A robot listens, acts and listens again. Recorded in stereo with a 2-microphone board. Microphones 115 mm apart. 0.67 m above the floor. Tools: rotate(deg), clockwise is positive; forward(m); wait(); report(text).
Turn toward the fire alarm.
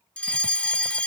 rotate(-30)
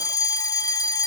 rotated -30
rotate(-140)
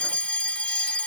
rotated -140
rotate(-15)
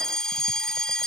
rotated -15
report("Found it: a fire alarm, straight ahead.")